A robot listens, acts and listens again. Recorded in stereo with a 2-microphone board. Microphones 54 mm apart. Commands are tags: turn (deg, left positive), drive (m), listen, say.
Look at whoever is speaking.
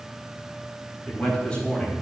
<turn deg="20"/>
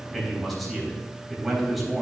<say>Found it: a man speaking, straight ahead, over 4 m away.</say>